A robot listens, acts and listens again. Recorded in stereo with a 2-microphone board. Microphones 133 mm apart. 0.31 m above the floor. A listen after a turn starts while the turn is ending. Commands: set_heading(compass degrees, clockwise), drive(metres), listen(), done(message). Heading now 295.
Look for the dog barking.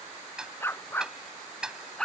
set_heading(265)
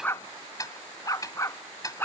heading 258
set_heading(93)
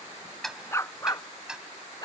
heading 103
set_heading(73)
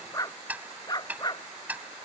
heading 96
set_heading(66)
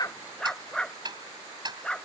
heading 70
done("Facing the dog barking.")